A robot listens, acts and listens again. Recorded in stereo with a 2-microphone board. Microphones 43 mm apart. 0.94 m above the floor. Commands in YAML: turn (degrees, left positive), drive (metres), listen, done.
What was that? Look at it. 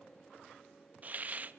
turn: -40
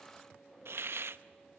turn: -100
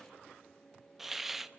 done: "Facing the hiss, under 1 m away."